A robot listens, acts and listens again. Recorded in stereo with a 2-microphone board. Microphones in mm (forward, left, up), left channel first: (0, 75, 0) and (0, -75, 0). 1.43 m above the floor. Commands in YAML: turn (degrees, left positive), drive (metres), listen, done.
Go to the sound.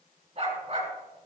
turn: -45
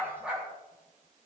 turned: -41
drive: 1.0
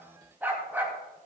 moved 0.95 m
turn: -15
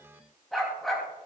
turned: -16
drive: 1.0
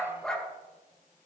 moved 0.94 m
drive: 1.0
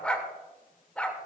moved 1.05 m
turn: 10
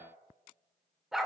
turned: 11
drive: 1.0
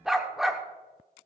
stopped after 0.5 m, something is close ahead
done: "Arrived at the dog barking, straight ahead."